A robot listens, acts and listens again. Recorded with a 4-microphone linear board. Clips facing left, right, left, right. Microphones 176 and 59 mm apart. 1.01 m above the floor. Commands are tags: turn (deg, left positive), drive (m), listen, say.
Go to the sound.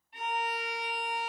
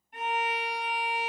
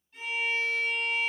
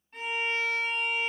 <turn deg="-55"/>
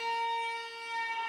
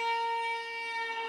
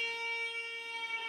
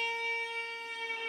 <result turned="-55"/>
<turn deg="-75"/>
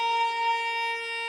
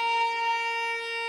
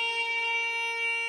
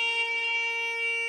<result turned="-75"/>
<turn deg="-10"/>
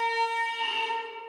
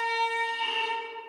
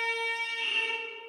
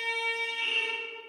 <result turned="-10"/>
<drive m="1.0"/>
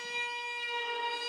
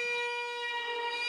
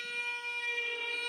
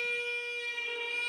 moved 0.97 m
<drive m="1.0"/>
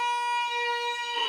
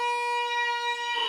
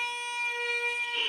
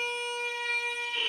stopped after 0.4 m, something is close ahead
<say>I am next to the violin.</say>